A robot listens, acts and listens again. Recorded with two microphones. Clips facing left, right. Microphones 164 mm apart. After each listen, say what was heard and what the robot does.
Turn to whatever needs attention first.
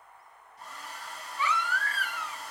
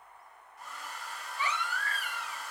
The baby crying: about 35° right or 145° right. Turn 35° right.
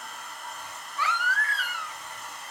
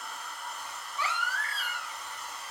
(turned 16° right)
So it is at 20° right. Turn 20° right.
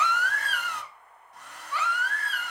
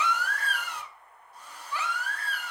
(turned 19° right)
Facing the baby crying, 1 to 2 m away.